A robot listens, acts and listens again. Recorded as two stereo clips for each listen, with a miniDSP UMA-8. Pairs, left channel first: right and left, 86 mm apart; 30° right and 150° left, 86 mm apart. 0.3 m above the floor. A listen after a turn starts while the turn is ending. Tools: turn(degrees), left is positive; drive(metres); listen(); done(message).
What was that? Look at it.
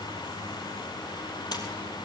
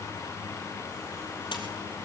turn(degrees=-55)
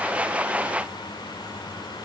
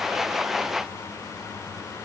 done("I heard a splash from this way, but can't make it out now.")